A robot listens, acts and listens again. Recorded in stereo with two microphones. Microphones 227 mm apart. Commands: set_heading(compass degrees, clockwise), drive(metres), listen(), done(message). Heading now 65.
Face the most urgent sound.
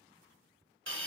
listen()
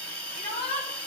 set_heading(30)
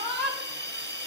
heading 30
done("Found it: a shout, straight ahead.")